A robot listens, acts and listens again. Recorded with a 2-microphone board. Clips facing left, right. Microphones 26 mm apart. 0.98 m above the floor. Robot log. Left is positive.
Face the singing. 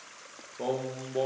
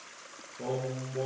note: The singing: about 55° left or 125° left.
cmd yaw +55
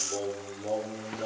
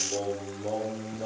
end: Found it: singing, straight ahead, over 4 m away.